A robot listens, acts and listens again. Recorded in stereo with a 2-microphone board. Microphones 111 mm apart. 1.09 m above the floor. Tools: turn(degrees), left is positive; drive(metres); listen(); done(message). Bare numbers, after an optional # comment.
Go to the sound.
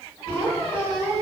# The squeak: about 30° left or 150° left.
turn(30)
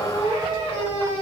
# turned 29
# So it is at 120° left.
turn(120)
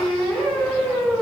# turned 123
drive(1.0)
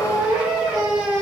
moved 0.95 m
# The squeak is now 10° right.
turn(-10)
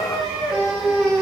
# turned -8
drive(1.0)
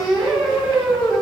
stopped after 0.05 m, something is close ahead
done("I am next to the squeak.")